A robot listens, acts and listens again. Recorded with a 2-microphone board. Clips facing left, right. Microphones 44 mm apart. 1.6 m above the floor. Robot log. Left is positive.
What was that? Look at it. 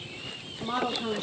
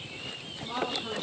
note: The woman speaking: about 50° left or 130° left.
cmd yaw +50
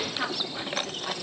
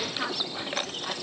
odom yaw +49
end: Found it: a woman speaking, straight ahead, 2 to 4 m away.